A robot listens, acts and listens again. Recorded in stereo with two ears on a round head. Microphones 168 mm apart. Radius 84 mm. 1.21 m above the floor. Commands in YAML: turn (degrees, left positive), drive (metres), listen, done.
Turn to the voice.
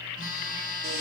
listen: true
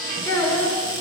turn: 15
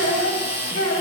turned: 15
turn: 35
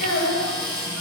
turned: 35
turn: 115
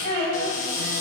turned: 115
turn: 30
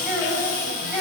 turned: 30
done: "Found it: a child speaking, straight ahead, over 4 m away."